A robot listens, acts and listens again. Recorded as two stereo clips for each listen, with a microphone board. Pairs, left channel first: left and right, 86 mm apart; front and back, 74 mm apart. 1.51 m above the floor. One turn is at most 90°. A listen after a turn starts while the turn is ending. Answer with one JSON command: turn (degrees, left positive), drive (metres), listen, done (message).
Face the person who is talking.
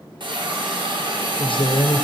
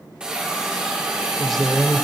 {"turn": 85}
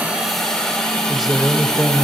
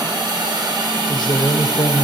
{"done": "Found it: a man speaking, straight ahead, under 1 m away."}